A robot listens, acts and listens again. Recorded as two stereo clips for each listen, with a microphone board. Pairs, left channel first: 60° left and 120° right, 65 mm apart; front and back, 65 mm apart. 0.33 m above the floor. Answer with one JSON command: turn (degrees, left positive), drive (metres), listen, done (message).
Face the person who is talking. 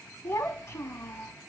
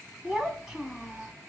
{"turn": 95}
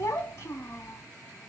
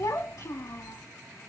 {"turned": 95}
{"turn": 15}
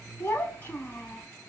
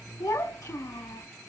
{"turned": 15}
{"done": "Facing the child speaking."}